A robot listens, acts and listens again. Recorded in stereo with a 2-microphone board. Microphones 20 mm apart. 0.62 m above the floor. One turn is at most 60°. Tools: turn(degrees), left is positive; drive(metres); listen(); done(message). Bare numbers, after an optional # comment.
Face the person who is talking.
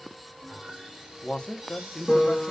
# The man speaking: about 55° left or 125° left.
turn(55)
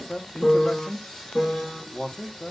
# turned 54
# So it is at 45° left.
turn(45)
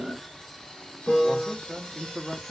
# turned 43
done("Found it: a man speaking, straight ahead, under 1 m away.")